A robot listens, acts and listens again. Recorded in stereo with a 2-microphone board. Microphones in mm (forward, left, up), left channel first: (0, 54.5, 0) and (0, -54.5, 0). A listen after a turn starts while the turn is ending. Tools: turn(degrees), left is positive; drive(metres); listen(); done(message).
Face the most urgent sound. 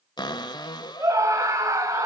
turn(degrees=-30)
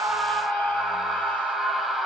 done("Found it: a scream, straight ahead, over 4 m away.")